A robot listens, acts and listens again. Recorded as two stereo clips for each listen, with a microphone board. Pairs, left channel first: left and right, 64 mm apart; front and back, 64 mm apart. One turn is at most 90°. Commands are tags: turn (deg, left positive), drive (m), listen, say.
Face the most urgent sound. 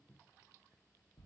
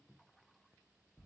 <listen/>
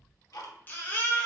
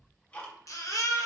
<turn deg="30"/>
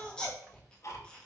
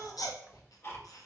<turn deg="15"/>
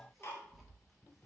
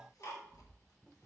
<listen/>
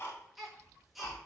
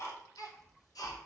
<say>Found it: a baby crying, straight ahead, 1 to 2 m away.</say>